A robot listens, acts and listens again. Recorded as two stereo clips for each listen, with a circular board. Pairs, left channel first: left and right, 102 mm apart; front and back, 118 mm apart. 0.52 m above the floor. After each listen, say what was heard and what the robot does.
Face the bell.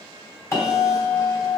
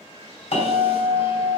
The bell: 30° left. Turn 30° left.
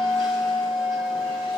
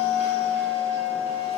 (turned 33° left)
Found it: a bell, straight ahead.